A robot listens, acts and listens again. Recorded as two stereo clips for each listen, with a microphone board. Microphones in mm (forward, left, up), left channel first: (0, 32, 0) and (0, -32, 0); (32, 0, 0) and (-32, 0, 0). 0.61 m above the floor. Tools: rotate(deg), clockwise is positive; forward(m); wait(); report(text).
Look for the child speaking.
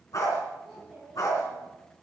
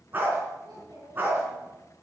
rotate(-180)
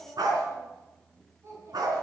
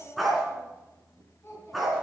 rotate(50)
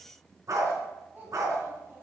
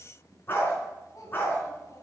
rotate(30)
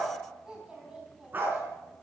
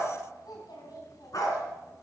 rotate(10)
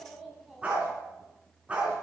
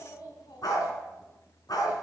report("Found it: a child speaking, straight ahead.")